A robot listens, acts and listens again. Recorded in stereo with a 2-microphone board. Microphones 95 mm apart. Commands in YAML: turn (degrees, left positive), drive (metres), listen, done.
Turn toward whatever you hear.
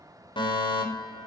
turn: 60
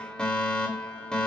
turn: 10
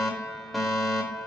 done: "Facing the fire alarm."